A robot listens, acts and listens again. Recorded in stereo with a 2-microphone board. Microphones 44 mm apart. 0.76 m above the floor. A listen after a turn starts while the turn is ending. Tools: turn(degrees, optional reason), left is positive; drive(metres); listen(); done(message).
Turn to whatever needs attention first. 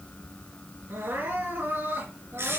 turn(degrees=-65, reason="The crying: about 65° right or 115° right.")
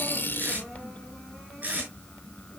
listen()
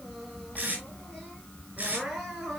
done("Facing the crying.")